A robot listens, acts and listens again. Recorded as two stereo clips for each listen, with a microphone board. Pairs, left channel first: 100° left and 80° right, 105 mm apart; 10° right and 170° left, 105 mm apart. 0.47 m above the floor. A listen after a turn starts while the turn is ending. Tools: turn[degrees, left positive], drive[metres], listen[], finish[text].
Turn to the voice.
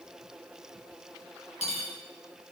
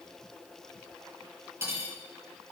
Action: listen[]
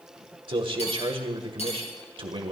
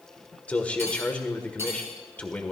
Thought: The man speaking: 85° right.
Action: turn[-85]
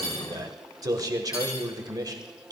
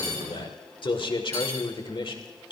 Thought: The man speaking is now 35° right.
Action: turn[-35]
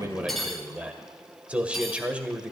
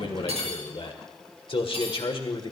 Action: finish[Found it: a man speaking, straight ahead, 1 to 2 m away.]